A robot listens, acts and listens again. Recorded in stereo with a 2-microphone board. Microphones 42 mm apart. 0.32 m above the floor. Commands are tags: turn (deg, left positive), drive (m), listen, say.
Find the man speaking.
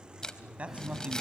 <turn deg="-30"/>
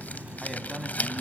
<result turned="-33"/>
<say>Facing the man speaking, 2 to 4 m away.</say>